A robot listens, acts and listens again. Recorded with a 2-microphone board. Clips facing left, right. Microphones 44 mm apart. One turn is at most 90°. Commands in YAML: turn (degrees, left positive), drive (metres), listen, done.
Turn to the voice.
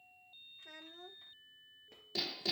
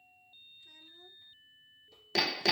turn: 60
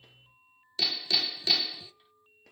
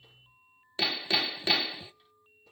listen: true
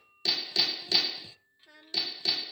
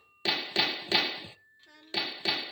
done: "Facing the child speaking, under 1 m away."